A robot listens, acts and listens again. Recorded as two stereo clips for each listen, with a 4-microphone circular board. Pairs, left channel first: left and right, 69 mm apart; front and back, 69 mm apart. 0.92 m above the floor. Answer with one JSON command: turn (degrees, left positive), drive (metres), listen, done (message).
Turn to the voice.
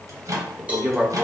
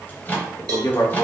{"turn": -15}
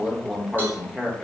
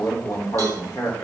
{"done": "Found it: a man speaking, straight ahead."}